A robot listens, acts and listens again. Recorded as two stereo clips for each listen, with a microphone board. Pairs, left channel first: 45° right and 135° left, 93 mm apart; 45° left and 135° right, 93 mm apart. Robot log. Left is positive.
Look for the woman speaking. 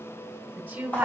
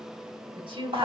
note: The woman speaking: 150° right.
cmd yaw -150
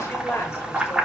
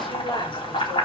note: The woman speaking is now 15° left.
cmd yaw +15
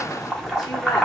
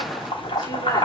cmd idle
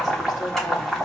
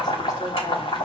cmd idle
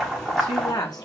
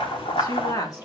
end: Found it: a woman speaking, straight ahead.